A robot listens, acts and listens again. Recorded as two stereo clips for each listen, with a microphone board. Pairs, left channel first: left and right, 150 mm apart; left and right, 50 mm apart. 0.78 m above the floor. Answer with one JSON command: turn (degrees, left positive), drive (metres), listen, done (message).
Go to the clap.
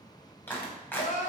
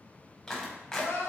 {"turn": 30}
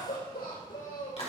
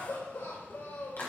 {"turn": 135}
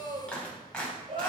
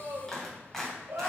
{"drive": 1.0}
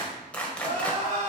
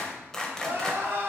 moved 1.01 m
{"turn": 10}
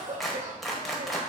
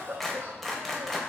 {"drive": 1.0}
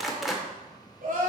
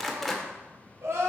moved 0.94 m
{"drive": 1.0}
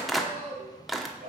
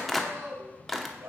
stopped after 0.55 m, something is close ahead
{"done": "I am next to the clap."}